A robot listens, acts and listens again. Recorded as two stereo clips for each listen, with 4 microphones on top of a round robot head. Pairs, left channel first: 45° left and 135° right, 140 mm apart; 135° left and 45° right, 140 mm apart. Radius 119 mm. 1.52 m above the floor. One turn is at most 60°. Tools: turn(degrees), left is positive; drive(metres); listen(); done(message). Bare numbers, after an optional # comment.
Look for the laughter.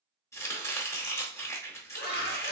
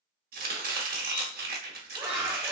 # The laughter: 30° left.
turn(30)
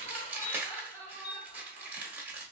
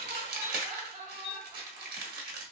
done("Facing the laughter.")